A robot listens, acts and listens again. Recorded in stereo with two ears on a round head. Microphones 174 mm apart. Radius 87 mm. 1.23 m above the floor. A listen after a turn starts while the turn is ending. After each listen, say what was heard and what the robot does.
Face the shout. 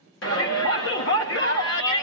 The shout: about 70° left or 110° left. Turn 70° left.
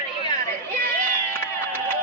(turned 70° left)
So it is at 15° left. Turn 15° left.
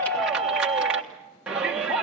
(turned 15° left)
Found it: a shout, straight ahead, 1 to 2 m away.